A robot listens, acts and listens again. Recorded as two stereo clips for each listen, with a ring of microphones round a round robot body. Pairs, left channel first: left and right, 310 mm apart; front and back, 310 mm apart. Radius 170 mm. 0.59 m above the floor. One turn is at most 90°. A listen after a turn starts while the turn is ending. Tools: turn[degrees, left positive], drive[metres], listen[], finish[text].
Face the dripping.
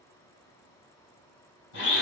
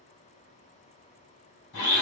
Action: listen[]
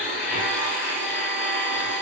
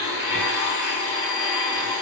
Action: listen[]
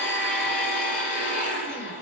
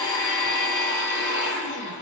Action: finish[I can't make out dripping, only a blender.]